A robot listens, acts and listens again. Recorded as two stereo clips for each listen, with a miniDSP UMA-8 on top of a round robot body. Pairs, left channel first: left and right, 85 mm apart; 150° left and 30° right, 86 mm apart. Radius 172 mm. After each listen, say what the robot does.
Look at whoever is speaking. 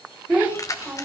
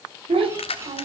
Turn 20° right.
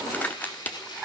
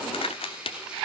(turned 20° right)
Turn 15° right.
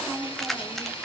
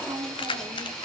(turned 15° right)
Found it: a child speaking, straight ahead.